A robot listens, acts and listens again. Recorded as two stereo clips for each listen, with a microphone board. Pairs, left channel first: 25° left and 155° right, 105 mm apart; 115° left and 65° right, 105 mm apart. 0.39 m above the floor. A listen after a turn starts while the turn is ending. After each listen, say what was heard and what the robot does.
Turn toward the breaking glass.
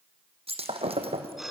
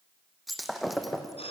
The breaking glass: 155° right. Turn 155° right.
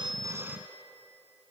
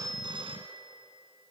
Facing where the breaking glass came from. I can't hear it now.